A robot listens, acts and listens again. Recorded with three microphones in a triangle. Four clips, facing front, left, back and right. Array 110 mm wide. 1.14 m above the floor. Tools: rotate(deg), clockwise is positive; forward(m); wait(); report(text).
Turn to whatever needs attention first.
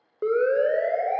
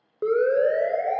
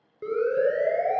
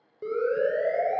rotate(-45)
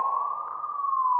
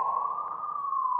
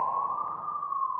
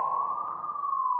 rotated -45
rotate(10)
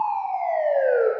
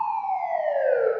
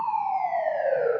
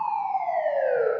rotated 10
report("Found it: a siren, straight ahead.")